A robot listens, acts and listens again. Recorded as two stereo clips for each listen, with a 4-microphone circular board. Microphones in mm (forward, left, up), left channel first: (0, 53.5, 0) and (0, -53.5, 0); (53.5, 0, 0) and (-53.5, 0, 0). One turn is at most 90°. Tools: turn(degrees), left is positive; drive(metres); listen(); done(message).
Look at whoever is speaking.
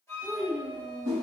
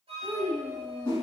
turn(degrees=-90)
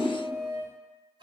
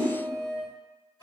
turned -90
turn(degrees=-45)
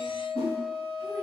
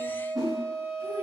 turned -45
listen()
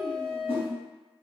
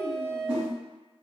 done("Facing where the child speaking came from. I can't hear it now.")